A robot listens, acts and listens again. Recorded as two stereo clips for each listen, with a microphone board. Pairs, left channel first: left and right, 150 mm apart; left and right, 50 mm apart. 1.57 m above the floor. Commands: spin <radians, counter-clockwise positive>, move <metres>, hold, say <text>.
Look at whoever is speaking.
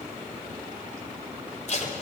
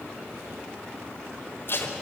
hold
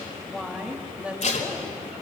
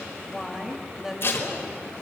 spin -0.52
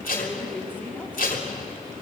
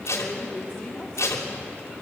spin 0.26
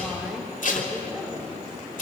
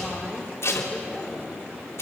spin -0.17
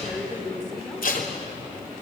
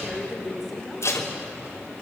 say Found it: a woman speaking, straight ahead, over 4 m away.